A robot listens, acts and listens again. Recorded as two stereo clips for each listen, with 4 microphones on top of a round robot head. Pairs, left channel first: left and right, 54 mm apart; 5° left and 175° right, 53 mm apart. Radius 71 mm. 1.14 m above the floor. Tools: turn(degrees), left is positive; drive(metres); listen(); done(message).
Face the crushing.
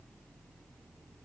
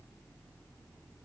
listen()
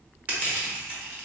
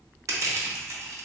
turn(degrees=-155)
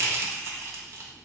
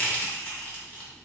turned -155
turn(degrees=-55)
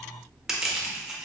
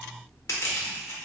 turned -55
turn(degrees=-10)
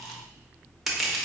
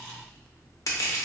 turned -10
done("Found it: crushing, straight ahead, 1 to 2 m away.")